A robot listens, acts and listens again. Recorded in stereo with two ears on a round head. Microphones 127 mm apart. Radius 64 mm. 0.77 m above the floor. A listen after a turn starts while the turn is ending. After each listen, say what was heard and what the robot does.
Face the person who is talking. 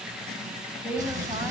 The woman speaking: about 15° right or 165° right. Turn 15° right.
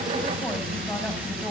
Facing the woman speaking.